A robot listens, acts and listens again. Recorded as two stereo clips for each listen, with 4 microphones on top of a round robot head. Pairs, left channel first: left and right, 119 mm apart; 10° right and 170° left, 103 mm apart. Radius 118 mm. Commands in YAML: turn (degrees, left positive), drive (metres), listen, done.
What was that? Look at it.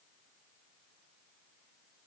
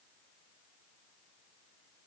listen: true
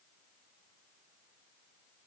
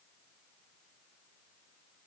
listen: true
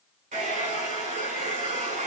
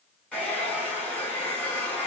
turn: -95
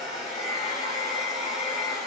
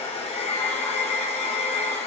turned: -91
done: "Found it: a hair dryer, straight ahead."